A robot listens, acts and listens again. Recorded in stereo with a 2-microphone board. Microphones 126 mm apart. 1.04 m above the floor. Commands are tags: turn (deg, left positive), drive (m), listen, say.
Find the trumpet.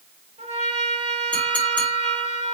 <turn deg="-55"/>
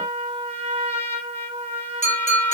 <turn deg="-55"/>
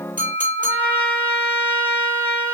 <turn deg="-20"/>
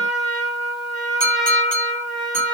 <say>Found it: a trumpet, straight ahead.</say>